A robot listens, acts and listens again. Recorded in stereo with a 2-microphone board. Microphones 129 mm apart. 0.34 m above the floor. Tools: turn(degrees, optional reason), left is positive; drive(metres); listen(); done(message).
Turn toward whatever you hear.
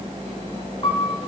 turn(degrees=45, reason="The piano: about 45° left or 135° left.")
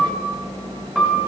done("Found it: a piano, straight ahead, 1 to 2 m away.")